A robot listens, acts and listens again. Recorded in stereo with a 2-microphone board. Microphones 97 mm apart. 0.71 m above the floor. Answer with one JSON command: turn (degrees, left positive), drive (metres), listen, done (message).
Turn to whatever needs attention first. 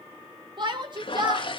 {"turn": -50}
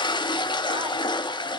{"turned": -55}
{"listen": true}
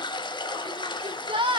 {"turn": -70}
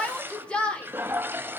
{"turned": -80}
{"turn": 10}
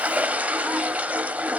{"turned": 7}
{"listen": true}
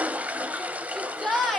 {"done": "Found it: a shout, straight ahead."}